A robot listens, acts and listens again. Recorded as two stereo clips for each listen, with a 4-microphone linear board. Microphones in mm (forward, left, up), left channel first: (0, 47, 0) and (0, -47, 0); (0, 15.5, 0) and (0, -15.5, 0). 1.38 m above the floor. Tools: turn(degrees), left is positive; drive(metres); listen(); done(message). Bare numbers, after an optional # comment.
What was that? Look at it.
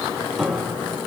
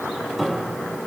turn(30)
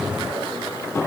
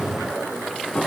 # So it is at 150° left.
turn(150)
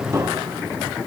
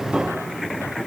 # The piano is now 35° right.
turn(-35)
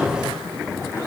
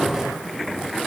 listen()
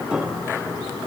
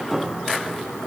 # The piano is now 10° right.
turn(-10)
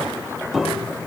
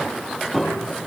done("Facing the piano, 2 to 4 m away.")